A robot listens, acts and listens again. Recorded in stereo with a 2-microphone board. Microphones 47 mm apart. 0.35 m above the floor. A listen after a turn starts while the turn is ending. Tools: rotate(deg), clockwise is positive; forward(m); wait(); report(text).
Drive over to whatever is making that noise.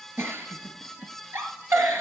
rotate(60)
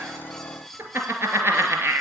rotate(55)
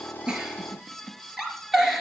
forward(1.0)
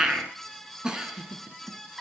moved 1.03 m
rotate(15)
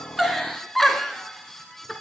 forward(1.0)
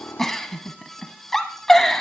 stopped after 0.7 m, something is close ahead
rotate(-10)
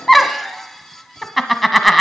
report("I am next to the giggle.")